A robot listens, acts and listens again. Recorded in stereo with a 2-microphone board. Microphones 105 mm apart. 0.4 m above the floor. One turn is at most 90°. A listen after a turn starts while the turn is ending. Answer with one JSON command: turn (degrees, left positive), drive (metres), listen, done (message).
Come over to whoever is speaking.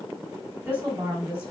{"turn": -15}
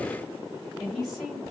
{"drive": 1.0}
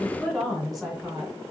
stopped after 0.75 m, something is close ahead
{"done": "Arrived at the woman speaking, straight ahead."}